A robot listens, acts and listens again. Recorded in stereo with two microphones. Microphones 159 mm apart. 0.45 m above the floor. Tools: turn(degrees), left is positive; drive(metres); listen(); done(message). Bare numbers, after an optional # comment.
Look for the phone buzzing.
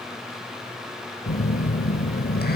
# The phone buzzing: about 70° left or 110° left.
turn(70)
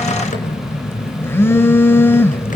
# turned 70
# So it is at 15° left.
turn(15)
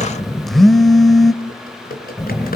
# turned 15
done("Found it: a phone buzzing, straight ahead, under 1 m away.")